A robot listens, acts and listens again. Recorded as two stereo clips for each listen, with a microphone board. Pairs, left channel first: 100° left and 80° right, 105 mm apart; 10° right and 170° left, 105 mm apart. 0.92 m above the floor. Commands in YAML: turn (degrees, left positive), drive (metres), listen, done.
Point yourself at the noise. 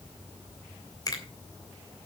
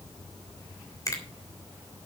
turn: 45
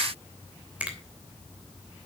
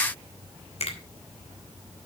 done: "Facing the finger snap, 2 to 4 m away."